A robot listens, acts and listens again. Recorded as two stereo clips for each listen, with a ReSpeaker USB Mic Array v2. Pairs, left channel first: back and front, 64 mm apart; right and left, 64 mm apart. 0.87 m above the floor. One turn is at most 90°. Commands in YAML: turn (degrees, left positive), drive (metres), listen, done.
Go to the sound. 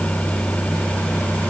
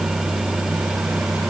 listen: true
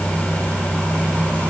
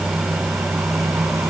listen: true
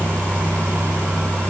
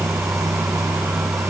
done: "I can't make out anything."